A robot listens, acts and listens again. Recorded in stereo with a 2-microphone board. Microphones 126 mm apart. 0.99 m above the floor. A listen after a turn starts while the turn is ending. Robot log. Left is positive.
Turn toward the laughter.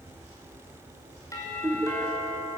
cmd yaw -30
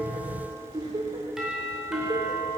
note: So it is at 150° right.
cmd yaw -150
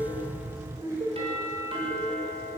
note: The laughter is now 25° right.
cmd yaw -25
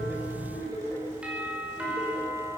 note: The laughter is now 10° left.
cmd yaw +10
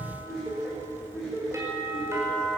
end: Facing the laughter, over 4 m away.